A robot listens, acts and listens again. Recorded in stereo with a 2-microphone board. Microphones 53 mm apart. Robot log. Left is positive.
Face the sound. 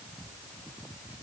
cmd idle
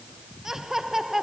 cmd yaw -30
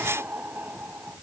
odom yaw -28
note: So it is at 145° right.
cmd yaw -145
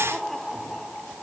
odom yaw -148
end: Found it: laughter, straight ahead.